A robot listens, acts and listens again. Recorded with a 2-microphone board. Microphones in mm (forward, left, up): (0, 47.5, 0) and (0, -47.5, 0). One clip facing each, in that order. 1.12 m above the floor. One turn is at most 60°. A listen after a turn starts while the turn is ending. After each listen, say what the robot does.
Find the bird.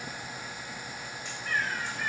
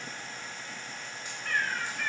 Turn 60° right.
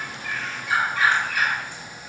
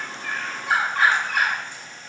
Turn 55° right.
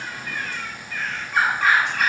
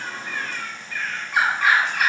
Found it: a bird, straight ahead, 2 to 4 m away.